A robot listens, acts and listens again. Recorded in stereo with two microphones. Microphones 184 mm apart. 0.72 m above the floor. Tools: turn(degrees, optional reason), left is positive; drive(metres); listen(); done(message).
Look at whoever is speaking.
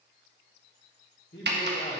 turn(degrees=65, reason="The man speaking: about 65° left or 115° left.")
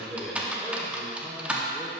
done("Facing the man speaking.")